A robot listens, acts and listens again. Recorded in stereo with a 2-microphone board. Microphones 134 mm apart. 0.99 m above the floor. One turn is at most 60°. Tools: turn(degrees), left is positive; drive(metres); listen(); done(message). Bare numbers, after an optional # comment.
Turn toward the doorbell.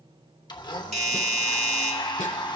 # The doorbell: about 55° right or 125° right.
turn(-55)
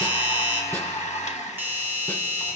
# So it is at 20° right.
turn(-20)
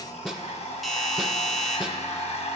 done("Found it: a doorbell, straight ahead.")